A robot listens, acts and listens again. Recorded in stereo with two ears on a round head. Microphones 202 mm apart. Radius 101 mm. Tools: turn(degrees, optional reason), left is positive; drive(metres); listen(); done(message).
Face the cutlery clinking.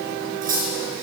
turn(degrees=-40, reason="The cutlery clinking: about 40° right or 140° right.")
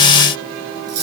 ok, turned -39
turn(degrees=-100, reason="So it is at 100° right.")
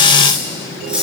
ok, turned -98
done("Facing the cutlery clinking.")